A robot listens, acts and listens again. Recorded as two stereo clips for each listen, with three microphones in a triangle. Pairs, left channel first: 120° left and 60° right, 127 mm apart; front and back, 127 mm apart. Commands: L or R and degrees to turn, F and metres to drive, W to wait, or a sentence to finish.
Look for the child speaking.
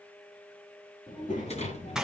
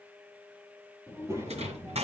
L110
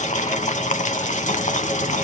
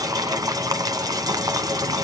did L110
W
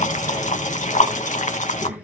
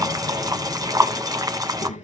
L20
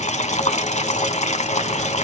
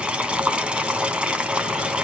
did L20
W
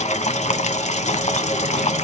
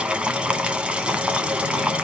W
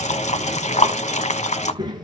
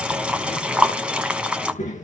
Facing the child speaking.